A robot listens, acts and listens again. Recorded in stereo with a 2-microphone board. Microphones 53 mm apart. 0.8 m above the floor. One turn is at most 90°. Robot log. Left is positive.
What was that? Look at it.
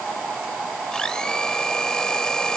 note: The blender: about 15° left or 165° left.
cmd yaw +15
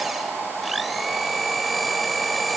end: Facing the blender.